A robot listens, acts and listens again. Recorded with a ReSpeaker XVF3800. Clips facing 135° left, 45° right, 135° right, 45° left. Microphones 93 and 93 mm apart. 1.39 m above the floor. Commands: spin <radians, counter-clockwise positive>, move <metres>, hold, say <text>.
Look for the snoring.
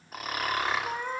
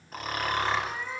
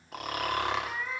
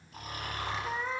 spin -2.44
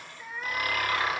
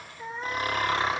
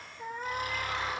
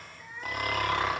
spin 0.26
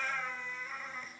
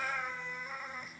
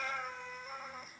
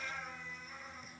hold
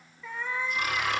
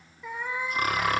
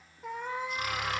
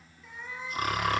say Facing the snoring.